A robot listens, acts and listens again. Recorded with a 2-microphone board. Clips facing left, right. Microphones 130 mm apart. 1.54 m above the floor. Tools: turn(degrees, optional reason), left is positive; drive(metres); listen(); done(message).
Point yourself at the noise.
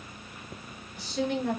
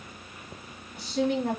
turn(degrees=-75, reason="The woman speaking: about 75° right or 105° right.")
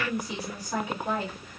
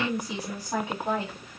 turn(degrees=-25, reason="So it is at 25° right.")
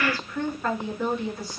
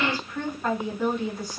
done("Facing the woman speaking, 2 to 4 m away.")